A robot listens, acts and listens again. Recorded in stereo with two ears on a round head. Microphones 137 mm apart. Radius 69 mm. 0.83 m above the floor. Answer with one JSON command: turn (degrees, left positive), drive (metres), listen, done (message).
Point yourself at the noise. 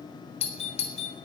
{"turn": 40}
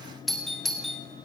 {"done": "Facing the doorbell, 2 to 4 m away."}